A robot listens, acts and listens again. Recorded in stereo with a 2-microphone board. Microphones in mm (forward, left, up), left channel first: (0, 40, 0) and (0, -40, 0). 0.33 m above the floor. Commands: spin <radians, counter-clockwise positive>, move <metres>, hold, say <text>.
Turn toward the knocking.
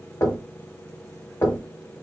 spin 0.61
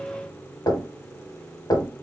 spin 1.83
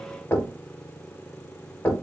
spin 0.52
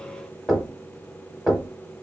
say Facing the knocking.